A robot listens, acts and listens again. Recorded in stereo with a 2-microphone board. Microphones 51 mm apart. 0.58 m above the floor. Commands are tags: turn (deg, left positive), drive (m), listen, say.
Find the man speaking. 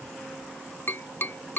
<listen/>
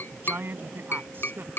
<turn deg="-45"/>
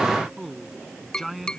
<say>Found it: a man speaking, straight ahead.</say>